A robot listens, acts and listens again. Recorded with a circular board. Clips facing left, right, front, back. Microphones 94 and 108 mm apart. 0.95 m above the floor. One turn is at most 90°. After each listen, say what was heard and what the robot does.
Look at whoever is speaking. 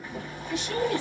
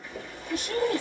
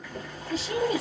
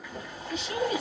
The woman speaking: 50° right. Turn 50° right.
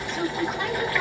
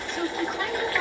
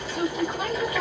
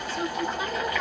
Facing the woman speaking, 1 to 2 m away.